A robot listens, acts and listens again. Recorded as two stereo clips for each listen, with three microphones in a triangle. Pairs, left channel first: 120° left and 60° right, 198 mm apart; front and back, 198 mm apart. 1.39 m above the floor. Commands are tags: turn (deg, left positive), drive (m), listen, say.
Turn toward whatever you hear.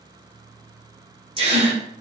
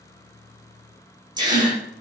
<turn deg="-115"/>
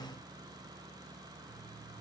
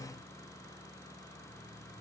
<say>Facing where the gasp came from. I can't hear it now.</say>